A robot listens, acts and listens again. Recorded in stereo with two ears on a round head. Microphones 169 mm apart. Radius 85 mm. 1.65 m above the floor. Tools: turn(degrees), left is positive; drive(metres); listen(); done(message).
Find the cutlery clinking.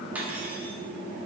turn(degrees=-30)
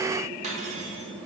turn(degrees=-140)
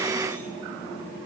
turn(degrees=15)
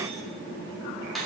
done("Found it: cutlery clinking, straight ahead.")